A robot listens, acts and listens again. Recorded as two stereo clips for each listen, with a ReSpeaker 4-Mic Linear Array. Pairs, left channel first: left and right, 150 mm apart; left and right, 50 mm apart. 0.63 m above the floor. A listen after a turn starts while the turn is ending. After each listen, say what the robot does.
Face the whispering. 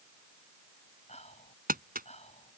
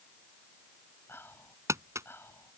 Turn 50° left.
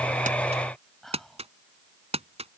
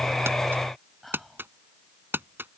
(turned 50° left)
Found it: whispering, straight ahead.